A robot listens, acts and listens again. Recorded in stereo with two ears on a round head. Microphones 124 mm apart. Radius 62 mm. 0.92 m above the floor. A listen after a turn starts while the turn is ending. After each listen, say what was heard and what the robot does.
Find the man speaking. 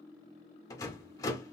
Keep listening.
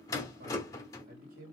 The man speaking: about 65° right or 115° right. Turn 65° right.
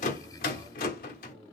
Keep listening.
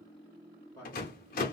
So it is at 20° left. Turn 20° left.
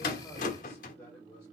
The man speaking is now 10° left. Turn 10° left.
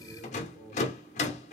Facing the man speaking.